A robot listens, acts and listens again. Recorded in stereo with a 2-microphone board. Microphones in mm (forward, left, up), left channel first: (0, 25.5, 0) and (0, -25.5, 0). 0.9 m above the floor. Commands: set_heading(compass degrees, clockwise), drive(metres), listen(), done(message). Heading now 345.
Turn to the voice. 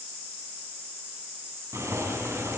listen()
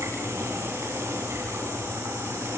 listen()
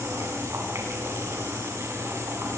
done("I can't make out anyone speaking to turn to.")